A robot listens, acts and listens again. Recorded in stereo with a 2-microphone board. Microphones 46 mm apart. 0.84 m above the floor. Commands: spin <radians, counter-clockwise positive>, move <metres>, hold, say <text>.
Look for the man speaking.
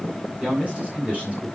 spin -0.61
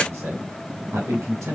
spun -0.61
spin -1.66
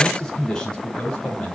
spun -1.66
spin 0.35
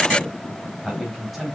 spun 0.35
say Facing the man speaking.